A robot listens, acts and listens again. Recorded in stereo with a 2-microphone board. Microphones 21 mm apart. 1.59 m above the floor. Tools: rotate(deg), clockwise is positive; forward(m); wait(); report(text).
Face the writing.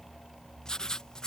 rotate(-35)
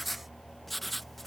report("Found it: writing, straight ahead.")